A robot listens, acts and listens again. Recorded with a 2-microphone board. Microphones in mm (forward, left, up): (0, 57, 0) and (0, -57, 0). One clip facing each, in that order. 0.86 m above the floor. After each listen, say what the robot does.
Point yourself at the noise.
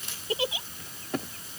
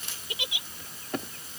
Turn 35° left.
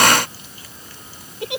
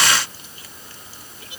Turn 110° left.
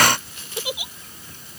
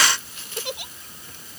Found it: a giggle, straight ahead.